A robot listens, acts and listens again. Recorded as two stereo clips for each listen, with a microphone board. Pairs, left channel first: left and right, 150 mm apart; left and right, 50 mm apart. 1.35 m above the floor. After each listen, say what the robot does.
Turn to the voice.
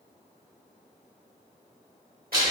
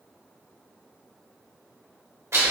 Keep listening.
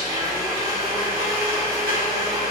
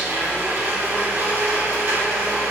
Keep listening.
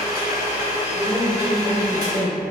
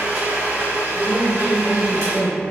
Turn 30° right.
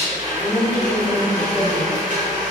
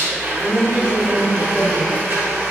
Found it: a woman speaking, straight ahead.